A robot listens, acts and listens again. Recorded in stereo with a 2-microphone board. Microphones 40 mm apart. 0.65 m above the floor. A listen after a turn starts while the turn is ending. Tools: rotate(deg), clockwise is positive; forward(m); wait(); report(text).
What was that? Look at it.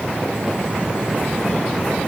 wait()
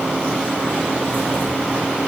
wait()
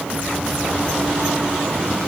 report("I can't make out anything to turn to.")